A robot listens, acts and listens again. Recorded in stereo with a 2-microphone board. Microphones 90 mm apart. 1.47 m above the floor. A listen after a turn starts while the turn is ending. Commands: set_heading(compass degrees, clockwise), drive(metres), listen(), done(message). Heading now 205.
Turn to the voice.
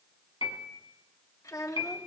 set_heading(170)
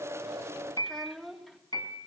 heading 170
done("Facing the child speaking.")